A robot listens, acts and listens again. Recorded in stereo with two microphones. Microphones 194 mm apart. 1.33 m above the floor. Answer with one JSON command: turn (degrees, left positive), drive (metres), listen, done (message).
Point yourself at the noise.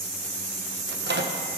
{"turn": -60}
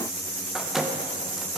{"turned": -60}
{"done": "Facing the microwave, 1 to 2 m away."}